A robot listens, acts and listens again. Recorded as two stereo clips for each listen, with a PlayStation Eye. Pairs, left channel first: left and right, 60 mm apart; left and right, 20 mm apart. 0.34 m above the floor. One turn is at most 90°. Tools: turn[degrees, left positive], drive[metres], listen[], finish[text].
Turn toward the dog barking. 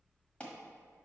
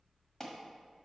Action: listen[]
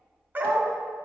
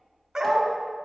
Thought: The dog barking: about 40° right or 140° right.
Action: turn[-40]
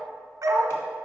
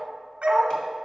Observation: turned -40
Thought: So it is at 100° right.
Action: turn[-90]
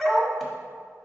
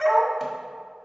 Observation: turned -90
Thought: The dog barking is now 10° left.
Action: turn[10]
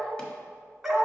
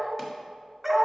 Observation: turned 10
Action: finish[Facing the dog barking.]